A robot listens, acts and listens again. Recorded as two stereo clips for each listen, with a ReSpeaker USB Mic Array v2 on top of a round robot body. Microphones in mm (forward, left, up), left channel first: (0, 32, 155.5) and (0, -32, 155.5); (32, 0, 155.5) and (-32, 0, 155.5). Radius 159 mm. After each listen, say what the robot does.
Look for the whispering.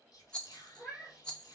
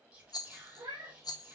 Turn 110° left.
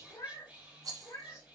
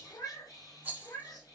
Turn 20° right.
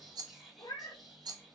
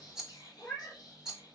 Facing the whispering.